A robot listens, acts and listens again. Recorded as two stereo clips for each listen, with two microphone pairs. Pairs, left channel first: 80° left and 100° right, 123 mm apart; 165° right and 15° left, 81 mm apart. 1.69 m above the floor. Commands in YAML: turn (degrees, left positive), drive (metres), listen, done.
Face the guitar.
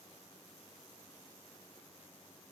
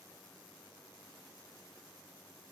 listen: true
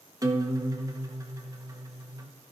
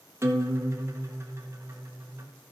turn: -40
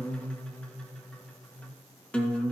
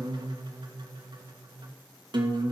done: "Facing the guitar."